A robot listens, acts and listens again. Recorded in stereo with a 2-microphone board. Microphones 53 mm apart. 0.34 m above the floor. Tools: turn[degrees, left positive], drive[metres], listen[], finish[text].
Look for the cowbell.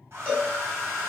Thought: The cowbell: about 30° right or 150° right.
Action: turn[-30]
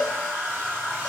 Action: finish[Facing the cowbell, 2 to 4 m away.]